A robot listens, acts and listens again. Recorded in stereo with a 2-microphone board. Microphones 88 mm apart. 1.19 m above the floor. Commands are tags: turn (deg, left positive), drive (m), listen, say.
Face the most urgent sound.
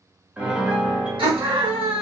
<turn deg="-90"/>
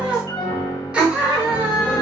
<turn deg="-15"/>
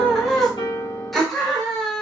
<say>Facing the scream, 1 to 2 m away.</say>